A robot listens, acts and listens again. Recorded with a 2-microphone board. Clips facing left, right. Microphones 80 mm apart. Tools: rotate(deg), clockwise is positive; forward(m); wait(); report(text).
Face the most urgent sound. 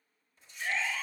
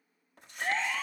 rotate(50)
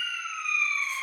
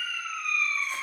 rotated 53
report("Found it: a siren, straight ahead, 2 to 4 m away.")